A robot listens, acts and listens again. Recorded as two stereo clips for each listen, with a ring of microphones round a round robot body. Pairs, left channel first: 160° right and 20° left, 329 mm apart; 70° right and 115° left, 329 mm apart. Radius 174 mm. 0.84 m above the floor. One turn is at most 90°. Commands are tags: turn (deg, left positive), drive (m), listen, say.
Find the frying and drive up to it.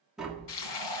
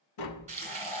<turn deg="-90"/>
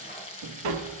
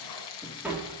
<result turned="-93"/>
<turn deg="-85"/>
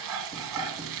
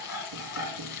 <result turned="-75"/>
<turn deg="-10"/>
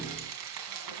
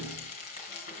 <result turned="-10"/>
<drive m="1.0"/>
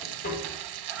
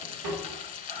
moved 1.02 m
<drive m="1.0"/>
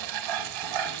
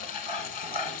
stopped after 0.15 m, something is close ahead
<say>I am next to the frying.</say>